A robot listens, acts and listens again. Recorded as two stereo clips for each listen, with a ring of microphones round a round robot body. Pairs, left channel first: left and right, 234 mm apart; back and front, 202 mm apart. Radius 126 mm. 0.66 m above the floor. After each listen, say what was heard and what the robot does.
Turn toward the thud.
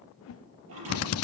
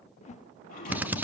The thud: 120° right. Turn 120° right.
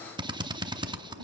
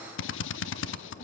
Facing where the thud came from. I can't hear it now.